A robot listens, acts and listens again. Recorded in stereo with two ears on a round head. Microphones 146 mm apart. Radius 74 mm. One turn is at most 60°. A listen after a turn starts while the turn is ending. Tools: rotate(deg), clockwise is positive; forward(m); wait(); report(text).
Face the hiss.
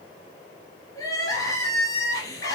wait()
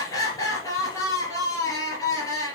wait()
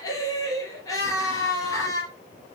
report("I can't make out a hiss to turn to.")